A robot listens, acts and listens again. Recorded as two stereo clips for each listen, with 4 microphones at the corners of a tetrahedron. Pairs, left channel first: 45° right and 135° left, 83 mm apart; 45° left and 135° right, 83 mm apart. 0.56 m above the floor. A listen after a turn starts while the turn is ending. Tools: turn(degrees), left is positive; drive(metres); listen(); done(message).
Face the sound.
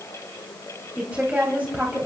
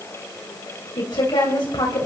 turn(degrees=60)
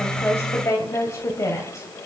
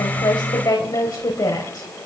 done("Found it: a woman speaking, straight ahead, 2 to 4 m away.")